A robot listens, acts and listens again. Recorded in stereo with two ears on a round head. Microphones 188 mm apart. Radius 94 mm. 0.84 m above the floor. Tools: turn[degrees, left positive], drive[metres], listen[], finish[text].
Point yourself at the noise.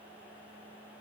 Action: listen[]
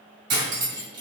Action: turn[-90]
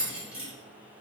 Thought: So it is at 10° right.
Action: turn[-10]
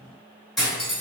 Action: finish[Facing the cutlery clinking.]